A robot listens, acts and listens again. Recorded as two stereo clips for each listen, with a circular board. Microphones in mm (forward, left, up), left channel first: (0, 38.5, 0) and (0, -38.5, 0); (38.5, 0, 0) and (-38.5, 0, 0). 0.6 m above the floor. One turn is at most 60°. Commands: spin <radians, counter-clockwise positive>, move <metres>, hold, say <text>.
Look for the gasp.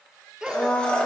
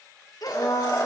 spin -0.17
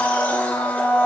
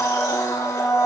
say I heard a gasp from this way, but can't make it out now.